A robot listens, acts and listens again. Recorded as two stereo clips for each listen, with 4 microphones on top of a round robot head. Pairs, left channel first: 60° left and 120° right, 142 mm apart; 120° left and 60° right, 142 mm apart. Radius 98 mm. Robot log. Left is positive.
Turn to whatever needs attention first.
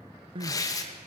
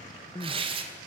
note: The crying: 175° right.
cmd yaw -175
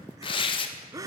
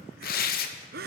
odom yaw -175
note: The crying is now 55° right.
cmd yaw -55
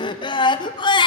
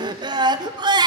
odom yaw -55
end: Facing the crying, 1 to 2 m away.